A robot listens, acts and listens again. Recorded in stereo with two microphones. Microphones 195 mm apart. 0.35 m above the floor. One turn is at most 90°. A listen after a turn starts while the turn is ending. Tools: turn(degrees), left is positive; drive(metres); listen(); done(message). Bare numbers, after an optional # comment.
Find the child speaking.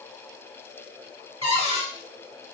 listen()
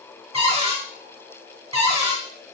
listen()
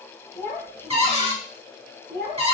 turn(30)
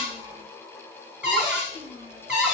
# So it is at 30° right.
turn(-30)
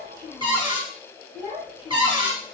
# The child speaking is now 10° right.
turn(-10)
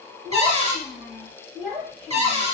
done("Facing the child speaking, 2 to 4 m away.")